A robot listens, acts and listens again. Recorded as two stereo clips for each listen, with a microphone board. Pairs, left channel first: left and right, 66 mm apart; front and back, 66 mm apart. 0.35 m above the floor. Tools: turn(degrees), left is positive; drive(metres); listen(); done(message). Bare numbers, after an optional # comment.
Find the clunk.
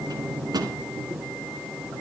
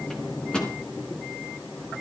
listen()
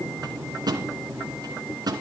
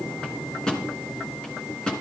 listen()
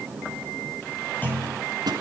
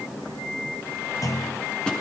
# The clunk: 30° left.
turn(30)
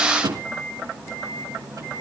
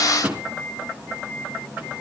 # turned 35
done("Facing where the clunk came from. I can't hear it now.")